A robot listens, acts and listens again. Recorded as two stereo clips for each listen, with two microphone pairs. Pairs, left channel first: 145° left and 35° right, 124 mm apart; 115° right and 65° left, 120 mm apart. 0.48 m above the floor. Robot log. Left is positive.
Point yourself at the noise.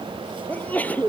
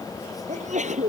note: The sneeze: 70° left.
cmd yaw +70
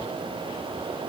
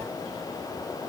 end: I heard a sneeze from this way, but can't make it out now.